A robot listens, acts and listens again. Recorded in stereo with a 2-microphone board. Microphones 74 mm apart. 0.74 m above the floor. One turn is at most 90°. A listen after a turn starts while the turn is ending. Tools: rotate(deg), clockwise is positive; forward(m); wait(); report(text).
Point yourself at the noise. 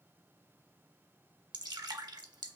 rotate(90)
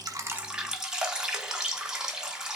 rotate(10)
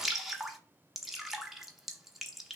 report("Found it: dripping, straight ahead, under 1 m away.")